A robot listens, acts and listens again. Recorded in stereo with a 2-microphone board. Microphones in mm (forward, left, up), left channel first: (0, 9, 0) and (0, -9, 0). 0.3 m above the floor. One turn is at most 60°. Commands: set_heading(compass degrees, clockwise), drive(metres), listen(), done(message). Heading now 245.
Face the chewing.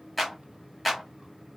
listen()
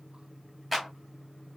listen()
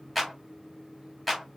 done("I can't make out chewing, only a clap.")